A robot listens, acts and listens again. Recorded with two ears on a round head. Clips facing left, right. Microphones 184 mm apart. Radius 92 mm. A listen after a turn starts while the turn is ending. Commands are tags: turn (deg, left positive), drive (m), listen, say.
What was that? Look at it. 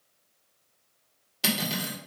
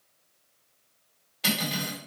<turn deg="60"/>
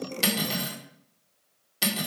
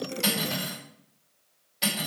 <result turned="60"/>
<turn deg="60"/>
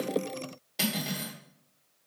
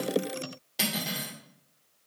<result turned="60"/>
<say>Facing the cutlery clinking.</say>